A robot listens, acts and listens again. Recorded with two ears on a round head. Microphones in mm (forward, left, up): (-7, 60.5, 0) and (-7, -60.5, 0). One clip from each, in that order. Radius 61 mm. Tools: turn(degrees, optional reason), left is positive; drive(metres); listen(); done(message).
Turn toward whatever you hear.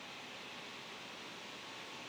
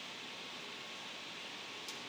listen()
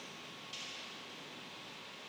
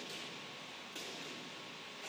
listen()
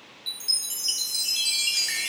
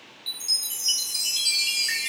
turn(degrees=30)
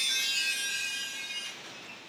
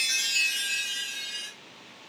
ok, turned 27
turn(degrees=-20, reason="So it is at 20° right.")
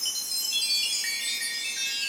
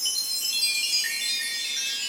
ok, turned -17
done("Found it: a chime, straight ahead, under 1 m away.")